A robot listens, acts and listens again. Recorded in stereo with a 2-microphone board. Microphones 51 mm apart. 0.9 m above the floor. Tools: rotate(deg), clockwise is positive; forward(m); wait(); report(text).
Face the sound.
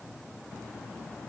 wait()
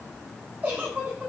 rotate(35)
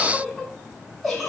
report("Facing the giggle.")